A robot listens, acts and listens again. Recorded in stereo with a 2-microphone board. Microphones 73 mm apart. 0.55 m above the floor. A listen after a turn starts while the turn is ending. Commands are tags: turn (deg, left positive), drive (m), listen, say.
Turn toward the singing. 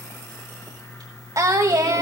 <turn deg="-60"/>
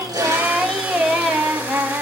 <turn deg="-15"/>
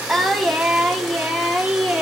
<say>Facing the singing.</say>